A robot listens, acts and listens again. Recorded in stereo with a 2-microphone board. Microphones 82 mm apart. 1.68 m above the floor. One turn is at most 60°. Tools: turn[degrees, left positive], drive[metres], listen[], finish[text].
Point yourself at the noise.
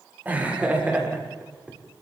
Thought: The laughter: about 15° right or 165° right.
Action: turn[-15]
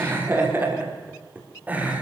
Thought: The laughter: about 20° right or 160° right.
Action: turn[-20]
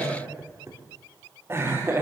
Thought: The laughter: about 30° right or 150° right.
Action: turn[-30]
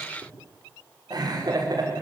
Thought: So it is at 125° right.
Action: turn[-60]
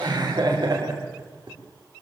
Thought: The laughter is now 60° right.
Action: turn[-60]
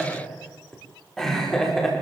Action: finish[Found it: laughter, straight ahead.]